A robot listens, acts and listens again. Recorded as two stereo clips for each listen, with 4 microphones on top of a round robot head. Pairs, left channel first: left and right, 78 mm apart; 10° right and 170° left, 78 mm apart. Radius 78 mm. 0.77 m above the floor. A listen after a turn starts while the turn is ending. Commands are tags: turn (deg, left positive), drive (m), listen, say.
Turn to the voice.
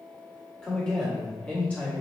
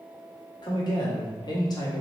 <turn deg="20"/>
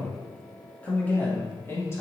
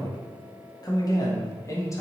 <turn deg="40"/>
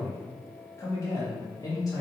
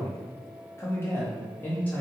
<turn deg="60"/>
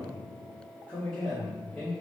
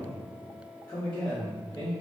<turn deg="20"/>
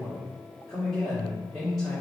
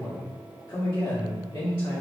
<say>Facing the man speaking, 1 to 2 m away.</say>